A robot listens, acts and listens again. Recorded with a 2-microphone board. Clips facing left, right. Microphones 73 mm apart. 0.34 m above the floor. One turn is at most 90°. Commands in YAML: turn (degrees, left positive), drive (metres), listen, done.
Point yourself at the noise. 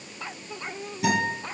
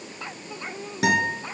turn: -75
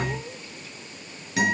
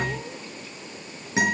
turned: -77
turn: -25
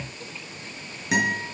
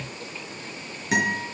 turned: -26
done: "Found it: a guitar, straight ahead, over 4 m away."